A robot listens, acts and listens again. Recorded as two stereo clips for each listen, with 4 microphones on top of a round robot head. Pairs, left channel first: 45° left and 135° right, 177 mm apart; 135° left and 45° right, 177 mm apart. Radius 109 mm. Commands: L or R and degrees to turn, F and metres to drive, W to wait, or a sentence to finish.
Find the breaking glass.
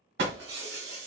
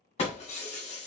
R165
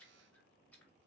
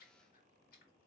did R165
Facing where the breaking glass came from. I can't hear it now.